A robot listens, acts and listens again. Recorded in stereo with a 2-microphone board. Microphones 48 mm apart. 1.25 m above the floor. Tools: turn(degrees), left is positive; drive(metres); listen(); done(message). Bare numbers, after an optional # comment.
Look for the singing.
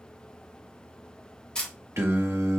# The singing: about 65° right or 115° right.
turn(-65)
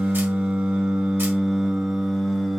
done("Facing the singing.")